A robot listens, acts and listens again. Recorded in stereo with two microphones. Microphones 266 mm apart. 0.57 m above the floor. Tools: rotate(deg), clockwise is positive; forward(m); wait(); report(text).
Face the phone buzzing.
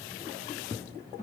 wait()
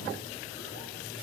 wait()
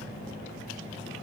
report("I can't make out a phone buzzing to turn to.")